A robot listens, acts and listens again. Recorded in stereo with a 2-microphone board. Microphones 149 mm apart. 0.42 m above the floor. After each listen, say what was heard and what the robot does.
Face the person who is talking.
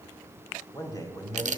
The man speaking: about 25° left or 155° left. Turn 25° left.
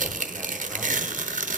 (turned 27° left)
Keep listening.
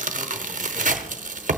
Keep listening.
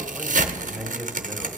Facing the man speaking, 1 to 2 m away.